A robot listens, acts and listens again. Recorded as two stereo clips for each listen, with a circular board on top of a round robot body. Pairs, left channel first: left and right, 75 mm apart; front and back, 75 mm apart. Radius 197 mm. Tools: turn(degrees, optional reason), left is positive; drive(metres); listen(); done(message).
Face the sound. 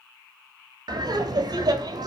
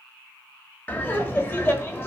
turn(degrees=-60, reason="The laughter: 60° right.")
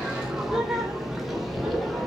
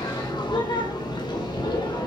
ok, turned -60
done("Facing the laughter.")